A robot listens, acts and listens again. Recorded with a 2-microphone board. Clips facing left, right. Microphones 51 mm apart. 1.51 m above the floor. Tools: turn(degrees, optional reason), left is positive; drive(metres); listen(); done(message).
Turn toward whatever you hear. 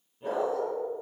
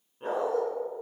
turn(degrees=-50, reason="The dog barking: about 50° right or 130° right.")
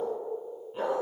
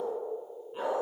turn(degrees=-10, reason="So it is at 10° right.")
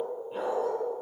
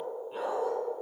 done("Found it: a dog barking, straight ahead.")